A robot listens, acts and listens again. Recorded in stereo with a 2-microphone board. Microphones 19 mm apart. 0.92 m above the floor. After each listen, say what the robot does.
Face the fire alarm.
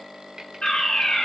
Turn 70° left.
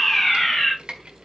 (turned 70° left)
Turn 30° left.
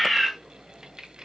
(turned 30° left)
Facing the fire alarm, over 4 m away.